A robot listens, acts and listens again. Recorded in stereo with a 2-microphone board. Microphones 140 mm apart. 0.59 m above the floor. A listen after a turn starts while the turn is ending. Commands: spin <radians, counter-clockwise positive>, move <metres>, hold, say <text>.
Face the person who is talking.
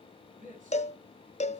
spin -1.31
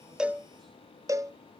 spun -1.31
hold
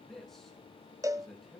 say Facing the man speaking.